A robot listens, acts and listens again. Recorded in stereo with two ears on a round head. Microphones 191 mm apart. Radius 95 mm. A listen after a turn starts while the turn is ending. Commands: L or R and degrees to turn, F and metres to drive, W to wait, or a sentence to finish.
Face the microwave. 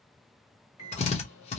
L75
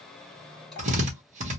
Facing the microwave.